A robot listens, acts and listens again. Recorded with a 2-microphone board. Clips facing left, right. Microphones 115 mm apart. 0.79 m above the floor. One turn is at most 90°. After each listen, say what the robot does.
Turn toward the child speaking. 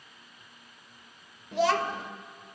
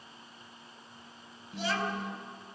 Turn 90° left.
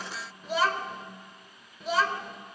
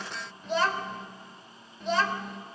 Found it: a child speaking, straight ahead, 1 to 2 m away.